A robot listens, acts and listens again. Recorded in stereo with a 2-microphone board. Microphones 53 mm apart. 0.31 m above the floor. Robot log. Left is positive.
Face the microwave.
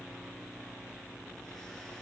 cmd idle
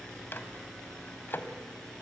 note: The microwave: about 45° left or 135° left.
cmd yaw +45
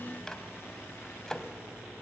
note: So it is at 15° left.
cmd yaw +15
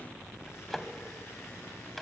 end: Facing the microwave.